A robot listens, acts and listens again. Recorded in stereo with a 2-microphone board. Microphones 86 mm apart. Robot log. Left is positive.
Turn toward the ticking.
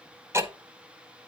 note: The ticking: about 30° right or 150° right.
cmd yaw -30
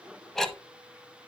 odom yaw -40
end: Facing the ticking, 1 to 2 m away.